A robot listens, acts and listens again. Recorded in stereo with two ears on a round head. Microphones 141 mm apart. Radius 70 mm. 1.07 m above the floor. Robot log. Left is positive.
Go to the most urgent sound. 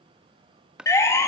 note: The siren: about 20° left or 160° left.
cmd yaw +20
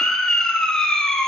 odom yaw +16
cmd fwd 1.0
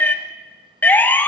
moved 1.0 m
note: The siren is now 15° left.
cmd yaw +15
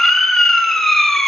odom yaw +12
cmd fwd 1.0
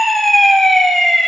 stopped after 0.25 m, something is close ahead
end: Arrived at the siren, straight ahead.